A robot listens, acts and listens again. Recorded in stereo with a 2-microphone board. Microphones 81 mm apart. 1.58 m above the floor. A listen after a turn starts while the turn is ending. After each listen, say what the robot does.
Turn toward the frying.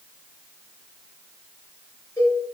Keep listening.
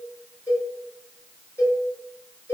Keep listening.
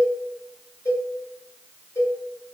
I can't make out frying to turn to.